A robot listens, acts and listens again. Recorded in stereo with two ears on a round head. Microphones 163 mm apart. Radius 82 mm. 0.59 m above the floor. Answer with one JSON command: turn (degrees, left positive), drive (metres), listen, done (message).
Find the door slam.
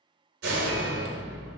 {"turn": -75}
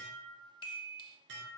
{"listen": true}
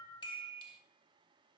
{"done": "I heard a door slam, but can't make it out now. It was about straight ahead or 30° right."}